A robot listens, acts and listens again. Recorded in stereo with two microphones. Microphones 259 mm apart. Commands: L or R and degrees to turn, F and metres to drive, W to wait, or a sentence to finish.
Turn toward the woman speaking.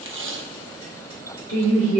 L65
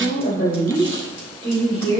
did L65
L40
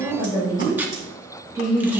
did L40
R15
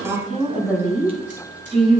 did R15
Found it: a woman speaking, straight ahead.